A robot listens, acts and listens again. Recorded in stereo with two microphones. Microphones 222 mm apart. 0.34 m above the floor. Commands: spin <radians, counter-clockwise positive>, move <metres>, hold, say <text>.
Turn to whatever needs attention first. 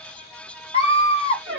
spin 0.44
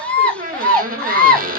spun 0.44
say Found it: a scream, straight ahead.